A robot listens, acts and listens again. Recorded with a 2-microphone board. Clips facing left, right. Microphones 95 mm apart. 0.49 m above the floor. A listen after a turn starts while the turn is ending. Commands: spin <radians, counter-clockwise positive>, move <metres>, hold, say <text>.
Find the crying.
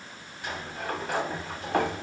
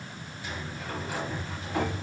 hold
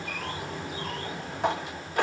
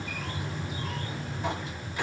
hold
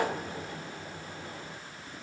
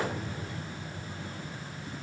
say I can't make out crying, only a sliding door.